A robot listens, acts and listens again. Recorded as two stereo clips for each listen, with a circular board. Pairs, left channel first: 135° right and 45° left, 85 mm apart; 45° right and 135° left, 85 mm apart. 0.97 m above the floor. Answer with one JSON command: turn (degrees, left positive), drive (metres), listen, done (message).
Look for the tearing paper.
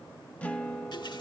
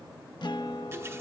{"listen": true}
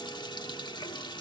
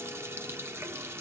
{"listen": true}
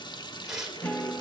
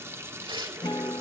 {"turn": 125}
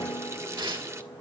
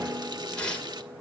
{"turn": 35}
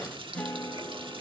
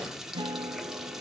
{"listen": true}
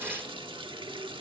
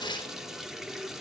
{"turn": -20}
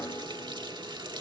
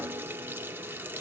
{"listen": true}
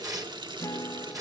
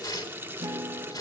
{"done": "Found it: tearing paper, straight ahead."}